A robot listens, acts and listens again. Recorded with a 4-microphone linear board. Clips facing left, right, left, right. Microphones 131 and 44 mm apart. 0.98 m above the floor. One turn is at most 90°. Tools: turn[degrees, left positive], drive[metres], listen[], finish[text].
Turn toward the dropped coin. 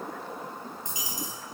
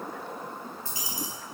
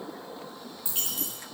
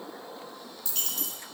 Thought: The dropped coin: about 20° left or 160° left.
Action: turn[20]
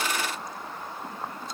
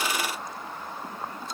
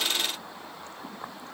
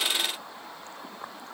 Action: listen[]
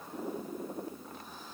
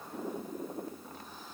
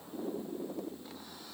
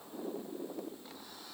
Action: finish[I heard a dropped coin, but can't make it out now. It was about straight ahead or 140° left.]